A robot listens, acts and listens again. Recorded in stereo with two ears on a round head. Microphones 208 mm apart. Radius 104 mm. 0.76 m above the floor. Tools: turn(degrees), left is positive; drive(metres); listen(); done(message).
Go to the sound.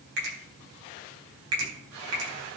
turn(degrees=-50)
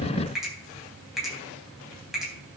drive(metres=1.0)
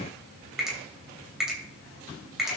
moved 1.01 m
drive(metres=1.0)
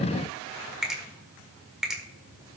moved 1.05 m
drive(metres=1.0)
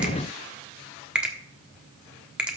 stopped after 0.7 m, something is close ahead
done("Arrived at the finger snap, straight ahead.")